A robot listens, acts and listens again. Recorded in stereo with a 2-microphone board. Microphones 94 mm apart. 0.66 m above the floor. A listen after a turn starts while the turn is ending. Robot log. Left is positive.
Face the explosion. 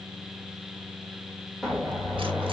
cmd yaw +30
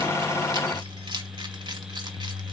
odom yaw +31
cmd idle
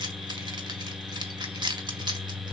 end: I heard an explosion, but can't make it out now. It was about 30° right or 145° left.